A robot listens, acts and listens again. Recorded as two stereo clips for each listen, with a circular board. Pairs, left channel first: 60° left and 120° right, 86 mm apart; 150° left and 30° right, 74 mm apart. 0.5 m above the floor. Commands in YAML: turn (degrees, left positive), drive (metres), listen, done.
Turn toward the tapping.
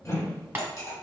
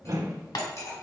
turn: 175
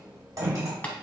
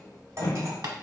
turn: -10
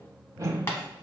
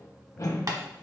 done: "Facing the tapping."